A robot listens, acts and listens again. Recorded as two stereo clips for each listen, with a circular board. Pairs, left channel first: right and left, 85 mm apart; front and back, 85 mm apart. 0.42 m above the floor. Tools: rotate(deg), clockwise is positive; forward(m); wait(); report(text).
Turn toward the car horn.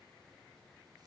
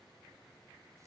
wait()
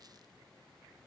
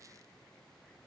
wait()
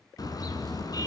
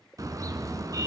rotate(130)
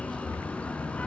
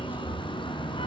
rotate(15)
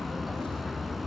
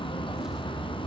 report("Facing the car horn, 2 to 4 m away.")